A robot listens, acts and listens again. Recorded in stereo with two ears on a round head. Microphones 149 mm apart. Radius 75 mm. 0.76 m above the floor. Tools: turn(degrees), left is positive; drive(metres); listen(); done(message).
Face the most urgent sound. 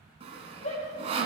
turn(degrees=45)
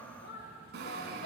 turn(degrees=85)
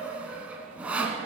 done("Found it: a shout, straight ahead, 2 to 4 m away.")